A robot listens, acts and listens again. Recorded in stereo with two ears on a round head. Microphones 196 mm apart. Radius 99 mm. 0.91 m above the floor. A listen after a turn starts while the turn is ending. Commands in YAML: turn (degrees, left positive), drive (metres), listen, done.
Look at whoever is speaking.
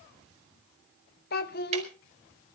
turn: 45
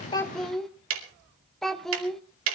done: "Found it: a child speaking, straight ahead, 1 to 2 m away."